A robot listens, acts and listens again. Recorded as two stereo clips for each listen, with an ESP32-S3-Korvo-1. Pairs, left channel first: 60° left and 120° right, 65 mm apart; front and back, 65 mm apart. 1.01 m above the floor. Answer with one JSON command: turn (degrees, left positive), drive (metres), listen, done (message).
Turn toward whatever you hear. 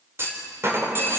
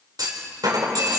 {"turn": -170}
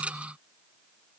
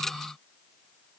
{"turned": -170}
{"done": "I heard a clunk from this way, but can't make it out now."}